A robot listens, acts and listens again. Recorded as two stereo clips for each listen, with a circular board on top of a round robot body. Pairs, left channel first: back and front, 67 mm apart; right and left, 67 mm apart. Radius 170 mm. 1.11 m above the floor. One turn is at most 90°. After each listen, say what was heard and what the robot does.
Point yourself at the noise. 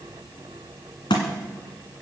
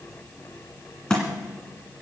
The thud: 170° right. Turn 90° right.
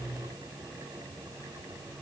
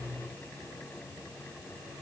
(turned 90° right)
Nothing new. It was at 80° right. Turn 80° right.
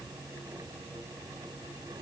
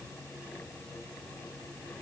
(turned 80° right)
Facing where the thud came from. I can't hear it now.